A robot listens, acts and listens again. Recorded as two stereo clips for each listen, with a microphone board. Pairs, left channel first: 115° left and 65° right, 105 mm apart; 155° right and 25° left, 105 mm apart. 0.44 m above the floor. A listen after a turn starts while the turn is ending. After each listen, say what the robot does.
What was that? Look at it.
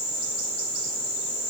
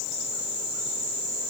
Keep listening.
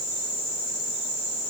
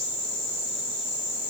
Keep listening.
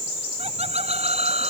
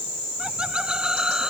Turn 60° right.
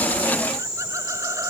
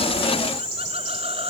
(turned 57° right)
Keep listening.
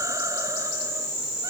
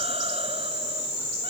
Keep listening.
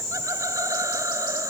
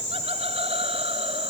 Found it: laughter, straight ahead.